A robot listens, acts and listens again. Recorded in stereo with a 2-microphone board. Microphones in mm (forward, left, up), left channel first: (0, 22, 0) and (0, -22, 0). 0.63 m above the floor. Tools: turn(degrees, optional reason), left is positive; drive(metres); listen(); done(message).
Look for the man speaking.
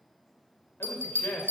turn(degrees=60, reason="The man speaking: about 60° left or 120° left.")
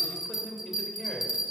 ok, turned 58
done("Facing the man speaking, 2 to 4 m away.")